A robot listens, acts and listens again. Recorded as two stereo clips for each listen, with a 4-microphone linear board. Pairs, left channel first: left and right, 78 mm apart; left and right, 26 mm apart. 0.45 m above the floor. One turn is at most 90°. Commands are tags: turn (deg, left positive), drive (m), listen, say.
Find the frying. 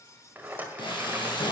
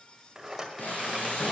<turn deg="90"/>
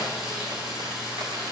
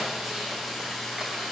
<say>Found it: frying, straight ahead.</say>